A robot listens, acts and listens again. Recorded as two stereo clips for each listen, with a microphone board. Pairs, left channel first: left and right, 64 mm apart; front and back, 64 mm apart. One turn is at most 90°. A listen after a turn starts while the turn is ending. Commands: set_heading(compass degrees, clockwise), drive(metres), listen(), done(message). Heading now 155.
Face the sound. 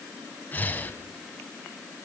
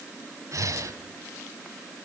set_heading(65)
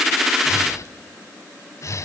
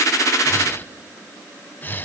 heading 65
set_heading(5)
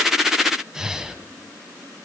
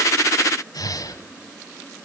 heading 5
set_heading(15)
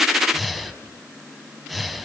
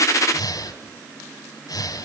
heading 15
done("Facing the breathing, 1 to 2 m away.")